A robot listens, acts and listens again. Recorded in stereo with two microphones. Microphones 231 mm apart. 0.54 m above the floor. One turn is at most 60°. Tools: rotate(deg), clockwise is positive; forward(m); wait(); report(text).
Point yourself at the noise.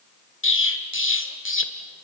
rotate(-60)
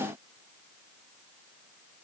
wait()
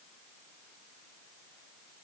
report("I heard an explosion, but can't make it out now. It was about straight ahead or 60° left.")